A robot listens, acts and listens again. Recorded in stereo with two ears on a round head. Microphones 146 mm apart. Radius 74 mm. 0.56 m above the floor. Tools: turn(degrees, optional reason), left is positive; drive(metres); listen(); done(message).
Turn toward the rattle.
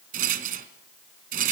turn(degrees=-60, reason="The rattle: about 60° right or 120° right.")
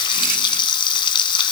listen()
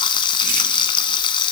listen()
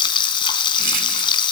done("I heard a rattle, but can't make it out now. It was about straight ahead or 60° right.")